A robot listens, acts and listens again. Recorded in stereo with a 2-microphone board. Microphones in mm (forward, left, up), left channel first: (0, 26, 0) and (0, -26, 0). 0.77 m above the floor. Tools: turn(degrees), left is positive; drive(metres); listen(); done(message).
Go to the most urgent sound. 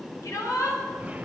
turn(degrees=90)
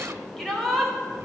drive(metres=1.0)
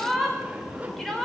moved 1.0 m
drive(metres=1.0)
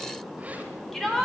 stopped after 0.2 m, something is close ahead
turn(degrees=10)
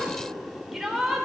done("Something is in my way. I am facing the shout but have not reached it.")